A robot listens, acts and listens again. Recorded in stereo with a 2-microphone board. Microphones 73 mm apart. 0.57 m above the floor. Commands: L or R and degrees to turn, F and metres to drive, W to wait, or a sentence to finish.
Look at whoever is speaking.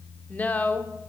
L20
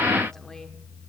W
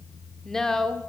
L10
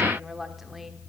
Found it: a woman speaking, straight ahead.